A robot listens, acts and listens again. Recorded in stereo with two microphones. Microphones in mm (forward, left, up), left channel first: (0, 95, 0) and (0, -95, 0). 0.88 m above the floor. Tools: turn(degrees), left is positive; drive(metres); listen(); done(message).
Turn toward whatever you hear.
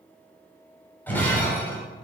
turn(degrees=30)
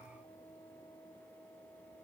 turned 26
listen()
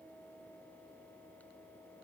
done("I heard breaking glass, but can't make it out now. It was about 15° right or 145° left.")